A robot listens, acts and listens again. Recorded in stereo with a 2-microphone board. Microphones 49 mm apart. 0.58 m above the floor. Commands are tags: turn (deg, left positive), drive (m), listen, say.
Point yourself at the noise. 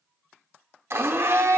<turn deg="-55"/>
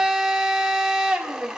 <turn deg="-10"/>
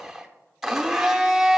<say>Found it: a blender, straight ahead.</say>